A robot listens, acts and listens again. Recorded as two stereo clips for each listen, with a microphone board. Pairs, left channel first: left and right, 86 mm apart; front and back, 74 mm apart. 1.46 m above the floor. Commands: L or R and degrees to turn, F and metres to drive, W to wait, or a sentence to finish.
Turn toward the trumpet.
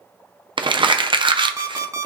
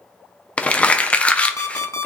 W
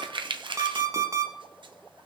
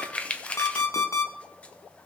W
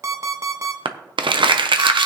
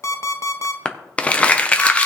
I can't make out a trumpet to turn to.